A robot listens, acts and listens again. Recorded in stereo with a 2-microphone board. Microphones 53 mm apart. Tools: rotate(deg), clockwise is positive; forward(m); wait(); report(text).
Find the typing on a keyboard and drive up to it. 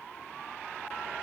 wait()
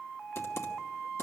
wait()
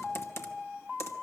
rotate(-55)
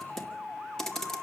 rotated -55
rotate(-10)
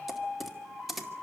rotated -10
forward(1.0)
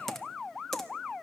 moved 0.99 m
forward(1.0)
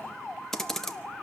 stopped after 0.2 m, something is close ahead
rotate(-10)
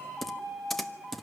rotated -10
report("I am next to the typing on a keyboard.")